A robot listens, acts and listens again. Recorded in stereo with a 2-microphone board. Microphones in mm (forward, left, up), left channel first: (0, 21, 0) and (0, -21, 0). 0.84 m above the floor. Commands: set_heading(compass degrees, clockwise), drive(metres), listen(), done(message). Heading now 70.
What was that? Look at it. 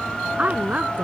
set_heading(110)
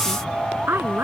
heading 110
set_heading(215)
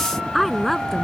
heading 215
done("Found it: a woman speaking, straight ahead.")